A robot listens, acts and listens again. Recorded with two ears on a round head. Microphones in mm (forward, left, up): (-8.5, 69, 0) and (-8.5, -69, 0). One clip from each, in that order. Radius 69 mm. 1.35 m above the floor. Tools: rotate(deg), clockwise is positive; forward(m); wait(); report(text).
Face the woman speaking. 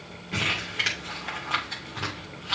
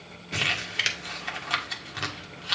wait()
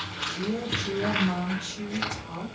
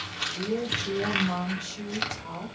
rotate(35)
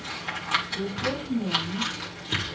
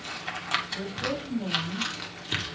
rotate(115)
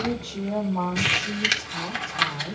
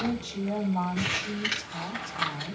rotate(35)
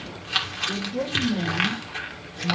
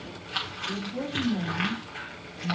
rotate(15)
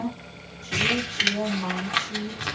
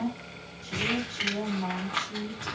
report("Facing the woman speaking.")